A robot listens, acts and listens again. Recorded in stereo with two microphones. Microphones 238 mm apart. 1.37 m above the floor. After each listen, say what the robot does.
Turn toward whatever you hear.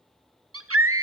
Turn 70° right.
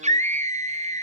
Turn 30° right.
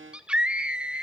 Found it: a scream, straight ahead.